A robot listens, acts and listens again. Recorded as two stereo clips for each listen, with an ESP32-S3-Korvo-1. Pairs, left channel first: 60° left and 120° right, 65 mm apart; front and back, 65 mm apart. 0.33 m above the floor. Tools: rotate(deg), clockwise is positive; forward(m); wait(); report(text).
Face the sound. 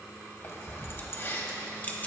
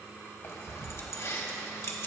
rotate(-10)
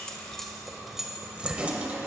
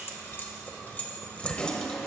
rotate(70)
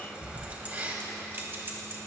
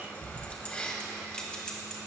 rotate(75)
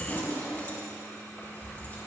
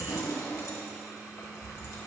report("Found it: keys jangling, straight ahead.")